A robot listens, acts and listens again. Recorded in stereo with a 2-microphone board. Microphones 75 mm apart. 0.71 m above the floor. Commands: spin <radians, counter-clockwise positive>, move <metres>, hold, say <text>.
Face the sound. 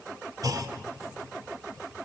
spin -0.96
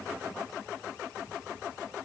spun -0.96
hold
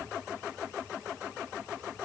say I heard a clunk, but can't make it out now. It was about straight ahead or 70° right.